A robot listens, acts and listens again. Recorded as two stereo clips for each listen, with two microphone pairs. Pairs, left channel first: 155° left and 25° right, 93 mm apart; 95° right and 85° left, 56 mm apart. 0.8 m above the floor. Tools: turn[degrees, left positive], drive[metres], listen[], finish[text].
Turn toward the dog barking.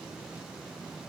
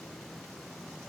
Action: listen[]
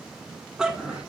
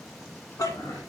Thought: The dog barking: 105° right.
Action: turn[-105]
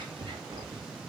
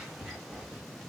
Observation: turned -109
Thought: The dog barking is now 10° left.
Action: turn[10]
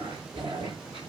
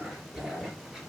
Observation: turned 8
Action: finish[Facing the dog barking, 2 to 4 m away.]